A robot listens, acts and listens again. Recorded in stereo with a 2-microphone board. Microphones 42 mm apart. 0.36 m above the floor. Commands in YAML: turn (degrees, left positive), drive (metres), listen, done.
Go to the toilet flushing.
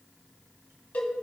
listen: true
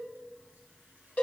listen: true
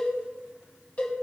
done: "I can't make out a toilet flushing to turn to."